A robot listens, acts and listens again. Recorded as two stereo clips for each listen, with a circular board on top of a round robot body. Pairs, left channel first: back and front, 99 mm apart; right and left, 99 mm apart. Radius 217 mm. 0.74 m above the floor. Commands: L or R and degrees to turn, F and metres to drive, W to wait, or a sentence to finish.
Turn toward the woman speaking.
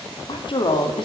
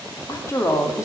R150
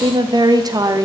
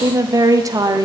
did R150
L45
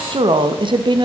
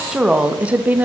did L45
L20
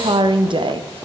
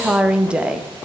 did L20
L10
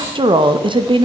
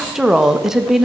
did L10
Facing the woman speaking, 1 to 2 m away.